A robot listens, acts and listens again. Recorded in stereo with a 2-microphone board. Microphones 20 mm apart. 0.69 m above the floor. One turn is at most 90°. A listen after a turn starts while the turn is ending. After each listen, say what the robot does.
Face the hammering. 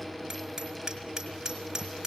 Turn 30° right.
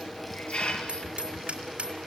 Turn 90° right.
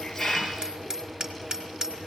Turn 30° right.
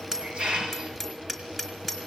Found it: hammering, straight ahead, over 4 m away.